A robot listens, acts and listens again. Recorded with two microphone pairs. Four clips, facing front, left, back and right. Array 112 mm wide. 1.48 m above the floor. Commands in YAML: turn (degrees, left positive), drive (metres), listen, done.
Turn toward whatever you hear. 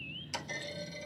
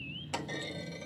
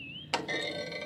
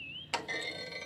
turn: -175
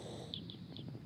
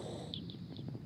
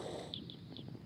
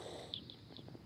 done: "Facing where the clunk came from. I can't hear it now."